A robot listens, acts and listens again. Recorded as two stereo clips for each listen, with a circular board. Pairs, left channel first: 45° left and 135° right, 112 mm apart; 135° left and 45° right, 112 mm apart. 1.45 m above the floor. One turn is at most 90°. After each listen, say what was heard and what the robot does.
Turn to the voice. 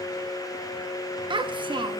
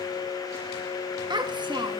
The child speaking: 90° right. Turn 90° right.
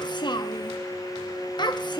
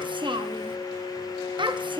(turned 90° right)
Found it: a child speaking, straight ahead, under 1 m away.